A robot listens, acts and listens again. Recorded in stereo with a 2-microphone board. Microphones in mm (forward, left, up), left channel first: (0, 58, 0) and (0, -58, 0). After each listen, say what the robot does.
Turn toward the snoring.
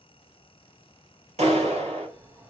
Turn 25° right.
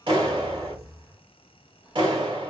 Facing the snoring.